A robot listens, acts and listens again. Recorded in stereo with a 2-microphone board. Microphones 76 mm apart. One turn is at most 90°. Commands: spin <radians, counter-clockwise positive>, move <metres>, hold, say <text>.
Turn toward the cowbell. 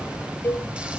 spin 0.44
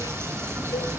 hold
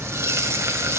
hold
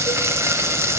say I heard a cowbell, but can't make it out now. It was about straight ahead or 130° left.